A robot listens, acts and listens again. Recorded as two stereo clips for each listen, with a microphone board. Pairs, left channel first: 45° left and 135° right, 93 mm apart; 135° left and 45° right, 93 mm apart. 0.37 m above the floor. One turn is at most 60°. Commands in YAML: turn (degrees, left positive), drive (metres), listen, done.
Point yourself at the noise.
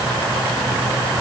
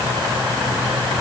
listen: true
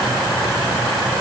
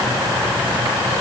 listen: true
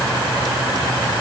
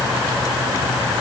done: "I can't make out anything."